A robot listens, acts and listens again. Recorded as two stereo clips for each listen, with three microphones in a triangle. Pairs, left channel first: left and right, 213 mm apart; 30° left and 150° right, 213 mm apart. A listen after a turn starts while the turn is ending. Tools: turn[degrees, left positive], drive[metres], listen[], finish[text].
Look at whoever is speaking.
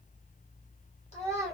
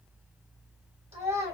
Thought: The child speaking: 150° left.
Action: turn[150]
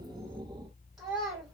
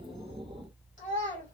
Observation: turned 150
Action: finish[Facing the child speaking, 1 to 2 m away.]